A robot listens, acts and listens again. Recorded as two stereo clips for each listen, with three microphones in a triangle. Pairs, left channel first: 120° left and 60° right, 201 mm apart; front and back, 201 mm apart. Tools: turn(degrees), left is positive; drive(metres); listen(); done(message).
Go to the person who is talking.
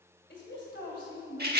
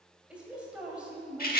turn(degrees=95)
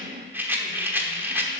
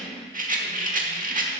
listen()
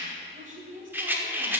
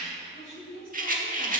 turn(degrees=-10)
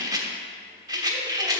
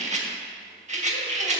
listen()
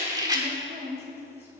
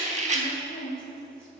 drive(metres=1.0)
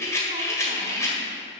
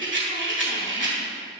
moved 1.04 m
listen()
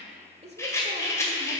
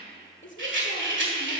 drive(metres=1.0)
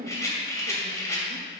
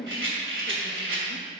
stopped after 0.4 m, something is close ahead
turn(degrees=-10)
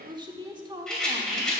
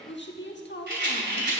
done("Arrived at the woman speaking, straight ahead.")